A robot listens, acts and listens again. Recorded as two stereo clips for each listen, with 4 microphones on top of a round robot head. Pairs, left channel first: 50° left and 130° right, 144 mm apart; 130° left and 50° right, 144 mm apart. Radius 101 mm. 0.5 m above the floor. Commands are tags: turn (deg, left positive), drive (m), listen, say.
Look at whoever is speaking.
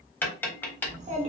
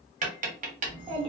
<turn deg="-100"/>
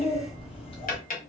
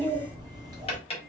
<say>Found it: a child speaking, straight ahead, 1 to 2 m away.</say>